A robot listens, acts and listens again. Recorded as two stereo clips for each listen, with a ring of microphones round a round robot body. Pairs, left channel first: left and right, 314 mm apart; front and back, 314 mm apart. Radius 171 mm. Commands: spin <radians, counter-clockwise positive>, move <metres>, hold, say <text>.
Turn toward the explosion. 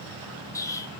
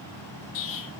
spin 0.17
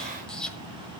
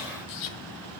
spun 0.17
say Facing the explosion.